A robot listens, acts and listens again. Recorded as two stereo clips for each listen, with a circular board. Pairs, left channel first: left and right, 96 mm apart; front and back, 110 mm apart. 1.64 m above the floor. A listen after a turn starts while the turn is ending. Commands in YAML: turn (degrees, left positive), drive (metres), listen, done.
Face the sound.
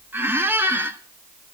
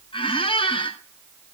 turn: -25
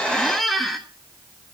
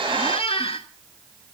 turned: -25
done: "Facing the squeak, 1 to 2 m away."